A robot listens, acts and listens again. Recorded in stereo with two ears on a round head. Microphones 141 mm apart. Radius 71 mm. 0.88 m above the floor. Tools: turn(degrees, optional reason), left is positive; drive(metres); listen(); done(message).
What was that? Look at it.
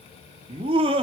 turn(degrees=-35, reason="The laughter: about 35° right or 145° right.")
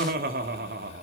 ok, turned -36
turn(degrees=-110, reason="So it is at 110° right.")
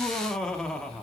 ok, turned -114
done("Facing the laughter, 2 to 4 m away.")